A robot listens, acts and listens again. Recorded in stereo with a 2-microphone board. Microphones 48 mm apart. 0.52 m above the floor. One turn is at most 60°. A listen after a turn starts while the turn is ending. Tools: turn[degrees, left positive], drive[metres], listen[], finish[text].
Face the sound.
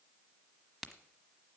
Action: turn[30]
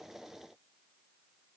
Action: listen[]
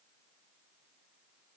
Action: finish[I heard a crack, but can't make it out now. It was about 25° right or 145° left.]